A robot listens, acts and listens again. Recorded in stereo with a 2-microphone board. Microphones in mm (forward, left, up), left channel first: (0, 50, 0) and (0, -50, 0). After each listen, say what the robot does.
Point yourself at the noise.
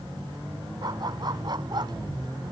Turn 45° right.
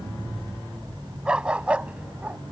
Turn 15° right.
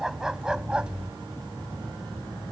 Turn 10° right.
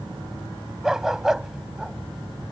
Found it: a dog barking, straight ahead.